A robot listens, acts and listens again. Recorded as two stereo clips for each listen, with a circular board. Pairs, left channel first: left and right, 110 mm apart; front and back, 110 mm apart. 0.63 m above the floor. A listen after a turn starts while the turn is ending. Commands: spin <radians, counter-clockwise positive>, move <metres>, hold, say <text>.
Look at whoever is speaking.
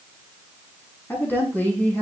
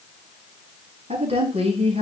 spin 2.88
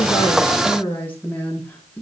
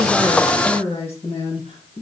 spin 0.35
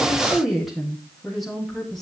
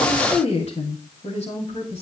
say Found it: a woman speaking, straight ahead.